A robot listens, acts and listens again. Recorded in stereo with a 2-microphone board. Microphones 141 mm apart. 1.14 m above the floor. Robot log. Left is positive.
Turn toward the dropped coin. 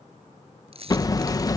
note: The dropped coin: about 50° right or 130° right.
cmd yaw -50
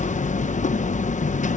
cmd idle
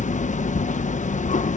end: I heard a dropped coin, but can't make it out now. It was about straight ahead or 80° right.